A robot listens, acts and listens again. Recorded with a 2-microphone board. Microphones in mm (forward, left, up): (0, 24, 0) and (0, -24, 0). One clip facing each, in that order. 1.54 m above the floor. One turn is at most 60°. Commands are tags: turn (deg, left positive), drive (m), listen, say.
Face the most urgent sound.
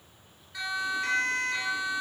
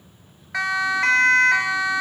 <turn deg="-60"/>
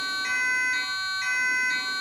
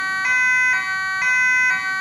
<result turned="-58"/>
<turn deg="-50"/>
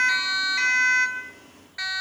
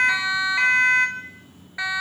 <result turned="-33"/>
<turn deg="-20"/>
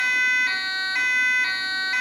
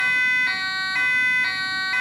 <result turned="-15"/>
<say>Facing the siren.</say>